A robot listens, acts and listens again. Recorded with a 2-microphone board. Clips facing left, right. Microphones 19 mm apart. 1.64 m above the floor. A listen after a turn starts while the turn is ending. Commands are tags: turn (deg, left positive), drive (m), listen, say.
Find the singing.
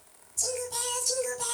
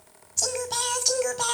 <turn deg="-50"/>
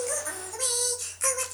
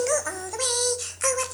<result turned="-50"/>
<turn deg="-15"/>
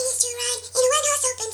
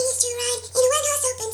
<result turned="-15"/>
<turn deg="15"/>
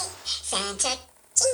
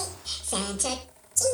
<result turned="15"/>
<turn deg="35"/>
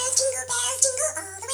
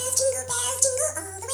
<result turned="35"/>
<turn deg="10"/>
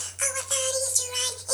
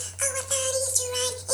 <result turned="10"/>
<say>Found it: singing, straight ahead, 2 to 4 m away.</say>